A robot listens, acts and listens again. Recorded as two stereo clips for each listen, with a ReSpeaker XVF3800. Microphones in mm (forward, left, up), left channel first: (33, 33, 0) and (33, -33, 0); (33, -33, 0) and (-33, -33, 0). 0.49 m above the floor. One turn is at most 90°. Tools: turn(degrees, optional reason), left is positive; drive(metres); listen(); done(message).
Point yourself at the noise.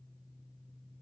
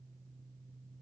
listen()
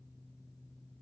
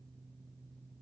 listen()
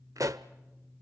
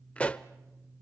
turn(degrees=-65, reason="The pop: 65° right.")
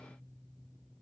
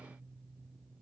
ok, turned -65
done("Facing where the pop came from. I can't hear it now.")